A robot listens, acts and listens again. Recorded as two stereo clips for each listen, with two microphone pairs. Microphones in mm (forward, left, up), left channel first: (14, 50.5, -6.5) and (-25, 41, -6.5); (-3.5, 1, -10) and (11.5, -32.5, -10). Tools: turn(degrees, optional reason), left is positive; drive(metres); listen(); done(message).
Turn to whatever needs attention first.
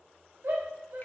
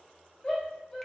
turn(degrees=180, reason="The shout: straight behind.")
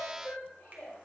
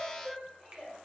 turn(degrees=10, reason="The shout is now 10° left.")
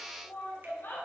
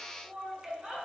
done("Facing the shout, 2 to 4 m away.")